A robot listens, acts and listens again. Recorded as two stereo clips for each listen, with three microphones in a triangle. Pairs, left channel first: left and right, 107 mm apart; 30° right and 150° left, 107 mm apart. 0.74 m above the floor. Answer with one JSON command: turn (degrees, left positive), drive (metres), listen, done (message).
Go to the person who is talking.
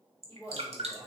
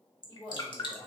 {"turn": 35}
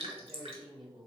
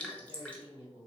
{"drive": 1.0}
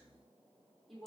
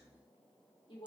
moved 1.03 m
{"drive": 1.0}
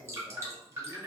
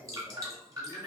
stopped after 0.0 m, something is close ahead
{"done": "Arrived at the woman speaking, straight ahead."}